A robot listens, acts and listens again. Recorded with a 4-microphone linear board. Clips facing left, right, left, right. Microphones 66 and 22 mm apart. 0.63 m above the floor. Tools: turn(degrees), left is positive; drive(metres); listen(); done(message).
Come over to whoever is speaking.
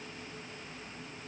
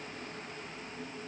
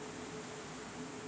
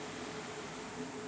listen()
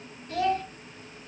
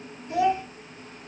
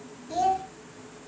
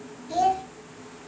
turn(degrees=-15)
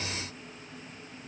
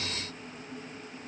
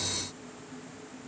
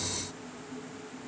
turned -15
listen()
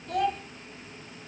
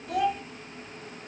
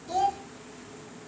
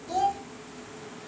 drive(metres=1.0)
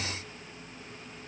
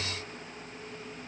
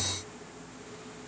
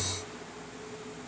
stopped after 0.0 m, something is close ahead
listen()
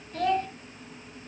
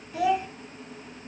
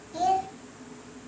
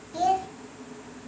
turn(degrees=-10)
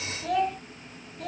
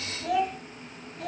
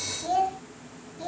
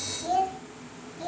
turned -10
done("Blocked. The child speaking is further on, straight ahead.")